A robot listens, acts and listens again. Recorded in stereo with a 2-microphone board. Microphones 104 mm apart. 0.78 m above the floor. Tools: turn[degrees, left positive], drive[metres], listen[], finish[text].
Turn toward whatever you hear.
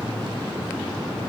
Action: listen[]
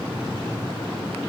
Action: listen[]
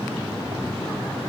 Action: finish[I can't make out anything to turn to.]